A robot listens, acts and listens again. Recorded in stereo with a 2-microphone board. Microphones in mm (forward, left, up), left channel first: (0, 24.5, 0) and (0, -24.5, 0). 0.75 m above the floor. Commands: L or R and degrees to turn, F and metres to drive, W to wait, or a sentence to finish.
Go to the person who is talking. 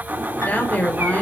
L30
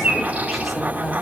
W
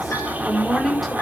F1.0
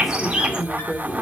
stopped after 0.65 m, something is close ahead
Blocked. The woman speaking is further on, straight ahead.